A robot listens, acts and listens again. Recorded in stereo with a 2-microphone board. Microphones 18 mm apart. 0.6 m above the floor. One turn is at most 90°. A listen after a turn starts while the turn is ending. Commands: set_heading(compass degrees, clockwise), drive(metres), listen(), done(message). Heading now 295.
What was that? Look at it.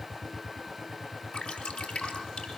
set_heading(205)
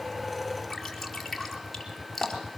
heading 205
done("Facing the dripping.")